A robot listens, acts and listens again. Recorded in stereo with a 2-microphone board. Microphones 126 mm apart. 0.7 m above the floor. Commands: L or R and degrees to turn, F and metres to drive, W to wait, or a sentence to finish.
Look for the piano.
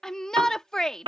R45
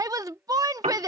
R90
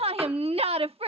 W
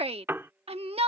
R20
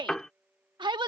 Facing the piano.